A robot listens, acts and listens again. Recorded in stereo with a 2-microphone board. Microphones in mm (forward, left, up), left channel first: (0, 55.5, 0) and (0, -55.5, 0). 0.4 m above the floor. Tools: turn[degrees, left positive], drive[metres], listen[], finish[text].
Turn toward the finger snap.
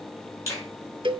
Thought: The finger snap: about 30° left or 150° left.
Action: turn[30]
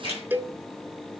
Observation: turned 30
Thought: So it is at 120° left.
Action: turn[120]
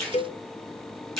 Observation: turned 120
Action: finish[Found it: a finger snap, straight ahead, over 4 m away.]